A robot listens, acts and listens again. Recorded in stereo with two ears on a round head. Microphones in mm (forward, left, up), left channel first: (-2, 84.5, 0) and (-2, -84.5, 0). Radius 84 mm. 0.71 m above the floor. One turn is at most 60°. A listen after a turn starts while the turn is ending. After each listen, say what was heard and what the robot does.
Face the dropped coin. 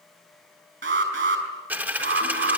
Turn 30° right.
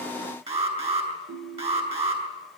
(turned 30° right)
Keep listening.
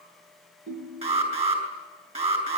I heard a dropped coin, but can't make it out now. It was about 20° left or 140° right.